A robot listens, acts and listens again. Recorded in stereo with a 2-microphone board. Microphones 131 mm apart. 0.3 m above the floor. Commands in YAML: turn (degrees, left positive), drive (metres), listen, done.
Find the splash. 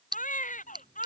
turn: -35
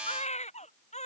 listen: true
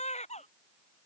done: "I heard a splash, but can't make it out now. It was about straight ahead or 110° right."